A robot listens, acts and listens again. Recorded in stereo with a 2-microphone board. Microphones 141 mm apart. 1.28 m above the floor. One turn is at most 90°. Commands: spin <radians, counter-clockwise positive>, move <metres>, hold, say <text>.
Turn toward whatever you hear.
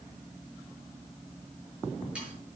hold
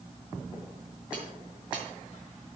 hold
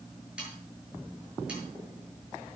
spin -0.52
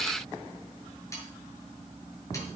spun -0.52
hold
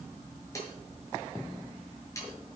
spin 0.44
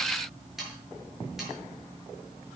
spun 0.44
say Found it: sawing, straight ahead.